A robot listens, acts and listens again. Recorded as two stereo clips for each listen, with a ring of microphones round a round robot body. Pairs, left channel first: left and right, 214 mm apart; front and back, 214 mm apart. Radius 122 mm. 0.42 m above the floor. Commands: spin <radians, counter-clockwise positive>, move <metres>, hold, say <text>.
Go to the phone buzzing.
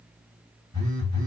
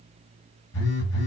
spin -0.26
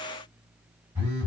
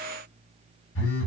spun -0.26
move 1.0
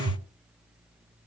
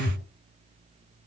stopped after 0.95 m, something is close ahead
spin -0.26
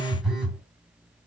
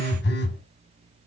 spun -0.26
say I am next to the phone buzzing.